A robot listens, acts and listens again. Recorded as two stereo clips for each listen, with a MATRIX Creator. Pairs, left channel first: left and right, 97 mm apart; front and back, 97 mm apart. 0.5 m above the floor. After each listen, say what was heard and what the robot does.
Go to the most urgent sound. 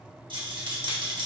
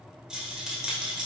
Keep listening.
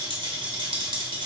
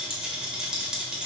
Keep listening.
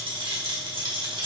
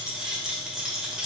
I can't make out anything urgent, only a rattle.